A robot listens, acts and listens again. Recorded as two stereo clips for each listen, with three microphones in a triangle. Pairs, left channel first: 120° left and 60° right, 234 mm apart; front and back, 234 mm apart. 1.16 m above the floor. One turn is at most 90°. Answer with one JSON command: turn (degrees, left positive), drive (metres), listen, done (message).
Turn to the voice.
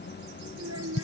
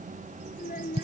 {"turn": -55}
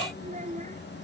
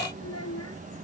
{"done": "Facing the child speaking."}